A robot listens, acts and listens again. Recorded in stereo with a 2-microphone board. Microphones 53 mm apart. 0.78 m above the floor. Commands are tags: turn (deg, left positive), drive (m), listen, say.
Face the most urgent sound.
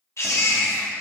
<turn deg="60"/>
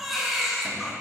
<say>Found it: a baby crying, straight ahead, under 1 m away.</say>